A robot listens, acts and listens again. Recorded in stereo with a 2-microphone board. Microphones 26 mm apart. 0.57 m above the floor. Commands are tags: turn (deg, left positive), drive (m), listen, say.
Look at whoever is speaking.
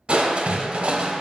<listen/>
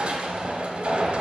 <listen/>
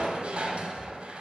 <say>I can't make out anyone speaking to turn to.</say>